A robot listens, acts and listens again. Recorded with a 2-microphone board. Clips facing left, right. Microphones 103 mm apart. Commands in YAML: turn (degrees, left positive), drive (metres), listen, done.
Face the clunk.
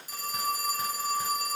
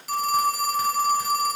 listen: true
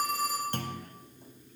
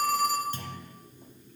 turn: 60
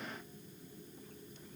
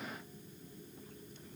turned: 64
listen: true
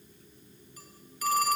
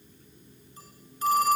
done: "I heard a clunk, but can't make it out now. It was about 5° right or 55° left."